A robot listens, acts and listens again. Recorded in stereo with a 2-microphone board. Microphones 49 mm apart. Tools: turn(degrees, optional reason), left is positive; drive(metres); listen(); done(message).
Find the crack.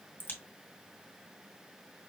turn(degrees=40, reason="The crack: about 40° left or 140° left.")
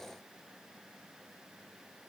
listen()
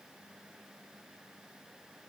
done("I heard a crack, but can't make it out now. It was about straight ahead or 100° left.")